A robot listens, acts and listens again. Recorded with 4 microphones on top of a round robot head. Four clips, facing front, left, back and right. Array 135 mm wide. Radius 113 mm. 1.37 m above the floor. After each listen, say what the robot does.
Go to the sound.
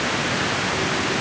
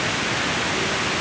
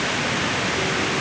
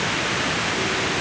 Keep listening.
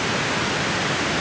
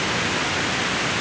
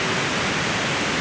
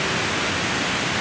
Keep listening.
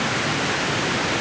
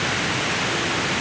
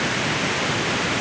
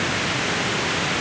I can't make out anything.